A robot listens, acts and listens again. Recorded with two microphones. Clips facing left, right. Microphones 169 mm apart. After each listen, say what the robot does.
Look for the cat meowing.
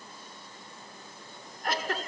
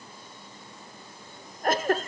Keep listening.
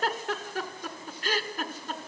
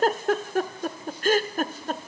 Keep listening.
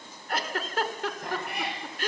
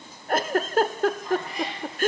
Turn 70° left.
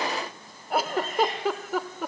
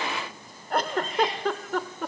Keep listening.
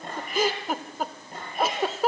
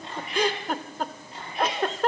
Turn 50° left.
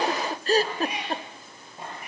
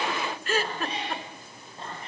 Turn 10° left.
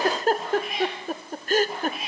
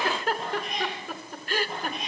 Found it: a cat meowing, straight ahead.